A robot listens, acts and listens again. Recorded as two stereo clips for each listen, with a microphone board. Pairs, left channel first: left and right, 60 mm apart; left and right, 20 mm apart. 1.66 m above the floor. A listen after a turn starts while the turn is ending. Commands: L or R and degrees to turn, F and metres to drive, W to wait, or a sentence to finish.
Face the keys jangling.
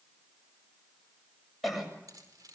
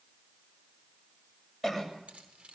R90
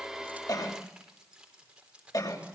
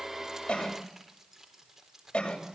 R20
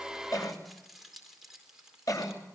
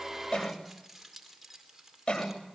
R10
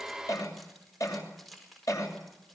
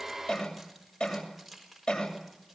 Found it: keys jangling, straight ahead, over 4 m away.